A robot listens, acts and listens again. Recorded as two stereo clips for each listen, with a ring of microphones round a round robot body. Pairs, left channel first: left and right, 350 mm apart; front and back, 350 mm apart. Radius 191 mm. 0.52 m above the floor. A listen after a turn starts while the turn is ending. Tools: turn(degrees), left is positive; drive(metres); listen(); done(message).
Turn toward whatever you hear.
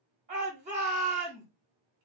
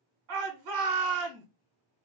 turn(degrees=-160)
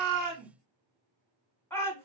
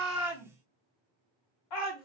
done("Facing the shout, 1 to 2 m away.")